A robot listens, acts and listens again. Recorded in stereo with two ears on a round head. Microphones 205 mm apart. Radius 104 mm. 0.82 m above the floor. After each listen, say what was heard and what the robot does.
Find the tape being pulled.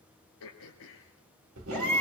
The tape being pulled: about 60° right or 120° right. Turn 60° right.
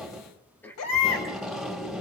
Found it: tape being pulled, straight ahead, 1 to 2 m away.